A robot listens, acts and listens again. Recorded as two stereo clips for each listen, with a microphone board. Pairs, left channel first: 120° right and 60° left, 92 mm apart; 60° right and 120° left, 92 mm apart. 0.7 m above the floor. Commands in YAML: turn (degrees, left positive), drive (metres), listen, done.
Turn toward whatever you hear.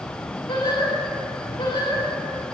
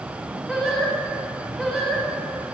turn: -145
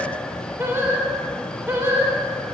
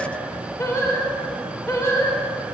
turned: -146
done: "Found it: singing, straight ahead, 2 to 4 m away."